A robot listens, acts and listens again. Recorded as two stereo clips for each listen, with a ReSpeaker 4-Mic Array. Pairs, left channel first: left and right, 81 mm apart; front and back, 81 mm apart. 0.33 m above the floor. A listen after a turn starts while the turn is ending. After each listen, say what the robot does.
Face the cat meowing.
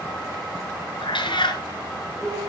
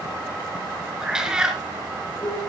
Turn 100° left.
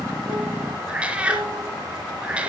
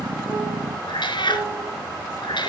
Turn 15° right.
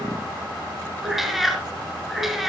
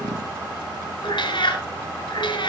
Found it: a cat meowing, straight ahead.